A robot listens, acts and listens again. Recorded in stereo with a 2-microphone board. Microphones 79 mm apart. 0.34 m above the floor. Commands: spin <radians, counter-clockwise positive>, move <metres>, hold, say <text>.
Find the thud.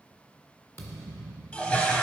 spin 0.52
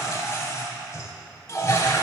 hold
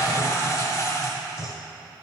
say I heard a thud, but can't make it out now. It was about straight ahead or 120° left.